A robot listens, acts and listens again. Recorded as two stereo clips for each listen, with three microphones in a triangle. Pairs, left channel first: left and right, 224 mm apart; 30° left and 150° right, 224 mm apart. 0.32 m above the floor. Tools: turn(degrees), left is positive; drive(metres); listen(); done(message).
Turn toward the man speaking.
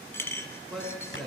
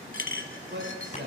turn(degrees=180)
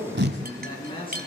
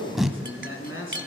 turn(degrees=25)
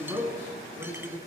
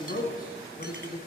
turn(degrees=-20)
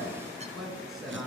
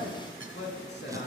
done("Facing the man speaking, over 4 m away.")